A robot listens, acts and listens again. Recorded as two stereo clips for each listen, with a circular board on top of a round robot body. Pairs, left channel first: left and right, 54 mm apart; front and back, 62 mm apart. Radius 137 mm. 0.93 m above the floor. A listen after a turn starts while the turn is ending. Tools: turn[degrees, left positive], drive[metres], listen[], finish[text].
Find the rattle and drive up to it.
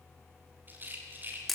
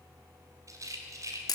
Thought: The rattle: 145° right.
Action: turn[-145]
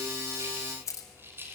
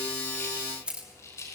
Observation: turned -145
Thought: The rattle is now 40° right.
Action: turn[-40]
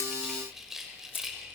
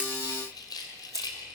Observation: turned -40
Action: drive[1.0]
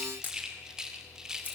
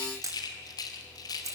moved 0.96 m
Thought: The rattle is now 10° right.
Action: turn[-10]
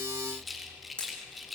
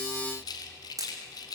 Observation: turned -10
Action: drive[1.0]
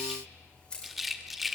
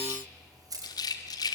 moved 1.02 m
Action: drive[1.0]
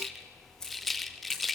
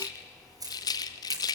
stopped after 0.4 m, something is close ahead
Action: finish[I am next to the rattle.]